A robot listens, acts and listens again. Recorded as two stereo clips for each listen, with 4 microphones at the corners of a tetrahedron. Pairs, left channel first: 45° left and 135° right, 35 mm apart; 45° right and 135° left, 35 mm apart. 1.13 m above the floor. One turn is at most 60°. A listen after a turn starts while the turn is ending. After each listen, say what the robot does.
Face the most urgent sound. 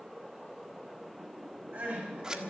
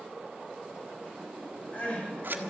Turn 60° right.
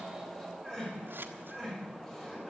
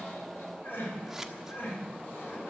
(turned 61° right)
Turn 30° right.
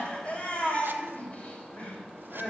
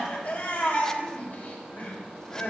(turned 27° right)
Found it: crying, straight ahead.